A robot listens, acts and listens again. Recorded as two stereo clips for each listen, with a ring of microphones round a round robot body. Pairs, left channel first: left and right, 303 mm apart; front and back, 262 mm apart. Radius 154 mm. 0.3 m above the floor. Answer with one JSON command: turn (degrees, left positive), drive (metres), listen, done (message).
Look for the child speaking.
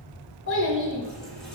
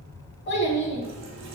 {"turn": 45}
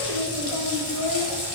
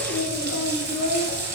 {"done": "Found it: a child speaking, straight ahead, 1 to 2 m away."}